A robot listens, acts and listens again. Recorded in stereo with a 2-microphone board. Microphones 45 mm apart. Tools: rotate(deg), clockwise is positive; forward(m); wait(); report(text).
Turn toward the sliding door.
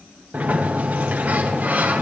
rotate(40)
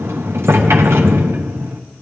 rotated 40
rotate(100)
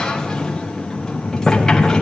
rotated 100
rotate(-15)
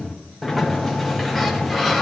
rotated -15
report("Facing the sliding door.")